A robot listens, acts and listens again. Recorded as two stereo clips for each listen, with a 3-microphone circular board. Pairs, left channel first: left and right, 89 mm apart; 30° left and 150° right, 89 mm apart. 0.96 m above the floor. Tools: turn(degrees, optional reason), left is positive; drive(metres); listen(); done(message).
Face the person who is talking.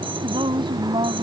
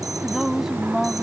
turn(degrees=-65, reason="The woman speaking: 65° right.")
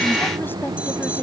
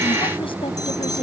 listen()
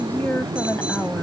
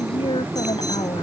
turn(degrees=20, reason="The woman speaking is now 20° left.")
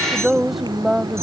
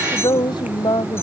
done("Found it: a woman speaking, straight ahead.")